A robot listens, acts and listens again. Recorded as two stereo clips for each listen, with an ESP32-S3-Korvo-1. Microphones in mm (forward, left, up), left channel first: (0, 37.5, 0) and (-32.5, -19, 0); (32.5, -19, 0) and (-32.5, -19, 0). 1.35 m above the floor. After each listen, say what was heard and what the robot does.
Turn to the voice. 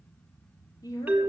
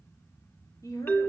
The woman speaking: 35° left. Turn 35° left.
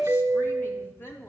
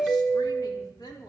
Found it: a woman speaking, straight ahead.